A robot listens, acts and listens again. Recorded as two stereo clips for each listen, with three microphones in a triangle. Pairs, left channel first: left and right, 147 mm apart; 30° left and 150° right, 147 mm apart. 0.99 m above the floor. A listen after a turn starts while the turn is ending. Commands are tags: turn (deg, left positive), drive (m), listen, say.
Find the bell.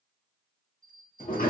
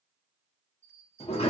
<turn deg="-80"/>
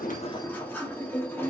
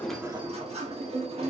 <listen/>
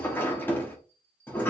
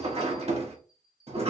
<turn deg="10"/>
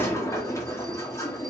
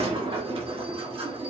<listen/>
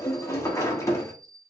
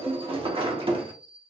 <say>Facing the bell, 1 to 2 m away.</say>